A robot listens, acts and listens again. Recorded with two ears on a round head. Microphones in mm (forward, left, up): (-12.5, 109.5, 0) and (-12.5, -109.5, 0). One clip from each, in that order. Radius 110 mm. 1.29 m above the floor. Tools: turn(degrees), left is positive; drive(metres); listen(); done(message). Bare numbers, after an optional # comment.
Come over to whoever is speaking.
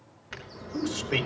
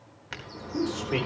# The man speaking: about 25° left or 155° left.
turn(25)
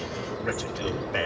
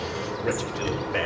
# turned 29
drive(1.0)
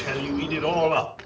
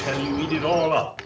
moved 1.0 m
drive(1.0)
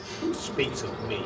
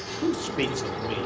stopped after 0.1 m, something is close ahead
done("Something is in my way. I am facing the man speaking but have not reached it.")